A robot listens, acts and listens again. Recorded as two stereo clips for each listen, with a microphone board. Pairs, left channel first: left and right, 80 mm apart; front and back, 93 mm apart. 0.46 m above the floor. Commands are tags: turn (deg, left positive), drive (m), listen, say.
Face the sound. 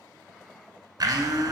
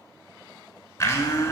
<turn deg="-60"/>
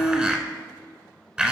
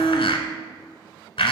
<turn deg="-15"/>
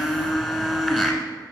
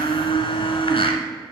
<say>Found it: a blender, straight ahead.</say>